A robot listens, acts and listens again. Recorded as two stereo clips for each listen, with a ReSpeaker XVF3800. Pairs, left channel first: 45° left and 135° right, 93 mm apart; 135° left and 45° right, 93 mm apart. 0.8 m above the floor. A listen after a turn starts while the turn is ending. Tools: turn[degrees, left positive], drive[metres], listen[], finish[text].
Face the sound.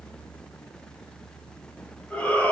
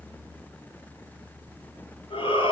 Thought: The shout: 120° left.
Action: turn[120]
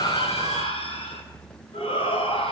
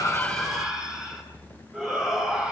Thought: The shout is now 40° left.
Action: turn[40]
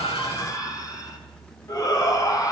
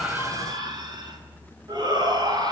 Action: finish[Found it: a shout, straight ahead.]